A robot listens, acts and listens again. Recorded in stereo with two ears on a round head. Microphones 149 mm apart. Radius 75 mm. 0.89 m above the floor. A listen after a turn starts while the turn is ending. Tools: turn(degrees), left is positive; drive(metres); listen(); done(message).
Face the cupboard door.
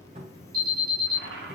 turn(degrees=-45)
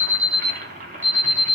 listen()
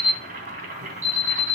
listen()
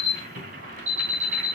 done("I heard a cupboard door, but can't make it out now. It was about straight ahead or 90° right.")